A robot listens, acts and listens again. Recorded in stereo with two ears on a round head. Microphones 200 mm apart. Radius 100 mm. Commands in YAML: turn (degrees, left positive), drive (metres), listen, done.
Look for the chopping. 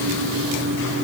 listen: true
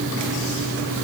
listen: true
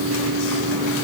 done: "I can't make out chopping."